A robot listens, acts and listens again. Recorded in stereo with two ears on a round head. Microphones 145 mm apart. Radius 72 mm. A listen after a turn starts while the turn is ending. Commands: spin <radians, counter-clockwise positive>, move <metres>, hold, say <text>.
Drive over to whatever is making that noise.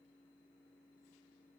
hold
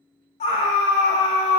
spin 0.70
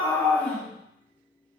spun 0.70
move 1.0
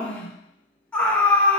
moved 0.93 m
spin 0.17
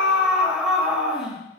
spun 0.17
move 1.0
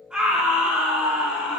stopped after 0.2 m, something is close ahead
say Arrived at the scream, straight ahead.